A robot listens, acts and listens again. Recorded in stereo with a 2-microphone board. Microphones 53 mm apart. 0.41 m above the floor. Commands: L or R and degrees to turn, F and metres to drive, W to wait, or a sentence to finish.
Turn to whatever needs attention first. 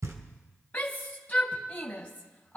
L30
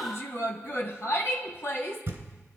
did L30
L120
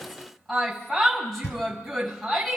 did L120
Found it: a shout, straight ahead.